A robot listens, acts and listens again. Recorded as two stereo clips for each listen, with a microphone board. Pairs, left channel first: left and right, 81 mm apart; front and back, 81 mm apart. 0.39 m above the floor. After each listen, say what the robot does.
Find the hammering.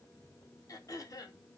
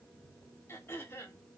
Keep listening.
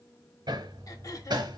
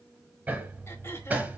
Turn 110° right.
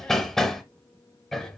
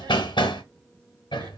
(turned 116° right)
Found it: hammering, straight ahead, under 1 m away.